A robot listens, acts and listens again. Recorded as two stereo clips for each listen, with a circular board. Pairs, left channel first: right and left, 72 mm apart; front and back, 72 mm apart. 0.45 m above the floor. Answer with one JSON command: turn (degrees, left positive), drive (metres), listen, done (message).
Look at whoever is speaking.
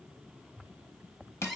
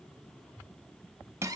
{"listen": true}
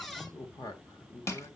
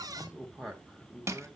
{"turn": -90}
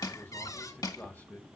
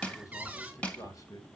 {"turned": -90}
{"turn": -30}
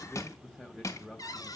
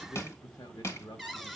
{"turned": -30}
{"done": "Facing the man speaking."}